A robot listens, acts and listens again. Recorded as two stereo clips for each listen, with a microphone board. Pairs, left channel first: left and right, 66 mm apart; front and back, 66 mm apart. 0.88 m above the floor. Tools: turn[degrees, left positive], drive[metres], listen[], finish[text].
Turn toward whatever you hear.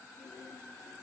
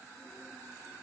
Action: listen[]
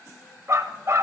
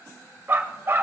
Thought: The dog barking: 125° right.
Action: turn[-125]
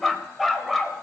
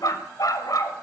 Action: finish[Found it: a dog barking, straight ahead, 1 to 2 m away.]